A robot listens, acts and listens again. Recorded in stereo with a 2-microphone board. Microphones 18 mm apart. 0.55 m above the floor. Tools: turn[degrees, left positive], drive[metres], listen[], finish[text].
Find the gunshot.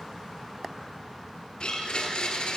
Action: listen[]
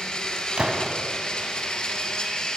Thought: The gunshot: about 70° right or 110° right.
Action: turn[-70]
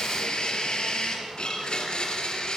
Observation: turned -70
Action: listen[]
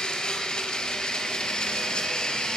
Action: finish[I heard a gunshot, but can't make it out now. It was about straight ahead or 40° right.]